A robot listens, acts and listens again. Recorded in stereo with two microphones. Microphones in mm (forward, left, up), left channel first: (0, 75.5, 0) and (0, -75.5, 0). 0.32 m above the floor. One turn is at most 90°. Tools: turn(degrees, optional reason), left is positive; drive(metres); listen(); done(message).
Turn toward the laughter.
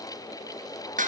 listen()
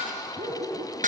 turn(degrees=-50, reason="The laughter: about 50° right or 130° right.")
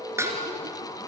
listen()
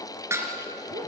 listen()
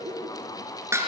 turn(degrees=-65, reason="So it is at 65° right.")
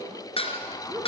turn(degrees=-20, reason="The laughter is now 20° right.")
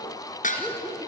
done("Found it: laughter, straight ahead, over 4 m away.")